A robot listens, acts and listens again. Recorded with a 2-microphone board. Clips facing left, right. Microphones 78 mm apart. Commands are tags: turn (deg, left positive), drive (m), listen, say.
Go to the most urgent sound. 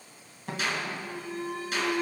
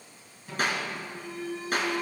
<turn deg="55"/>
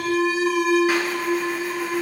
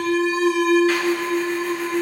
<drive m="1.0"/>
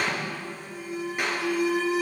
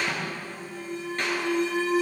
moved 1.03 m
<turn deg="10"/>
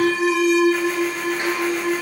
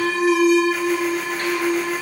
<drive m="1.0"/>
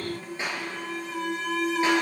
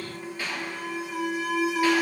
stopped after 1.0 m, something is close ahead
<turn deg="-10"/>
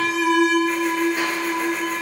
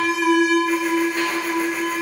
<say>Arrived at the alarm, straight ahead.</say>